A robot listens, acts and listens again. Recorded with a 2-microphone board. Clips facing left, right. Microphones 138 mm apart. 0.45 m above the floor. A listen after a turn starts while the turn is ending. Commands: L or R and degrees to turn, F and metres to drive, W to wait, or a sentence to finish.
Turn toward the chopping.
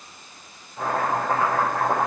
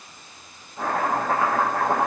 R30
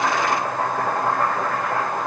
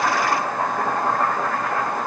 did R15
Found it: chopping, straight ahead.